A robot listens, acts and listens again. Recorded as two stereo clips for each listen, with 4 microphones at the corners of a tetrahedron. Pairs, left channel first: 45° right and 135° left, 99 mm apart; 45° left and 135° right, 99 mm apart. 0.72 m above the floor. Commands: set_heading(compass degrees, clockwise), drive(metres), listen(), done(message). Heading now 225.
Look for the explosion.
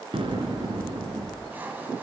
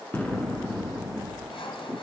set_heading(110)
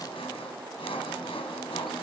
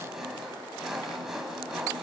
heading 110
done("Facing where the explosion came from. I can't hear it now.")